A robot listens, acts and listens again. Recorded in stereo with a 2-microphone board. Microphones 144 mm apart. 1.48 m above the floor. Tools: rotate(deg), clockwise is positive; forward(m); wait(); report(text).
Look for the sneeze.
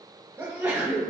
rotate(25)
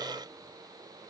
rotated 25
wait()
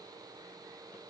report("I heard a sneeze, but can't make it out now. It was about straight ahead or 130° right.")